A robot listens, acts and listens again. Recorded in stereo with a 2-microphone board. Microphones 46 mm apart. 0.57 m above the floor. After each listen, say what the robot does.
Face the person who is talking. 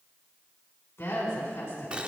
Turn 50° left.
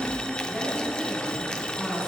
Facing the woman speaking, over 4 m away.